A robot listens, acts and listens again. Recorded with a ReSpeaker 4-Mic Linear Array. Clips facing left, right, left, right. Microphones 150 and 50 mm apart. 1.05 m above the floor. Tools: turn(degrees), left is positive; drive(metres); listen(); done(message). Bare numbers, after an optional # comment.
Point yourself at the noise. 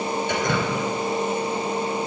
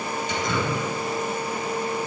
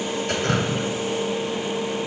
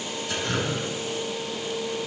# The dripping: about 60° left or 120° left.
turn(60)
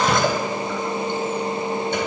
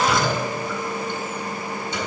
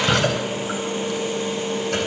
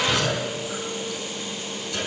# So it is at 60° left.
turn(60)
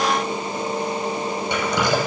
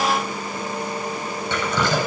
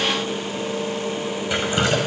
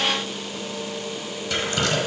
# The dripping is now 15° left.
turn(15)
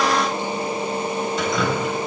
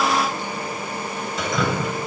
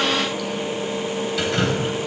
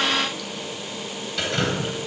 done("Found it: dripping, straight ahead.")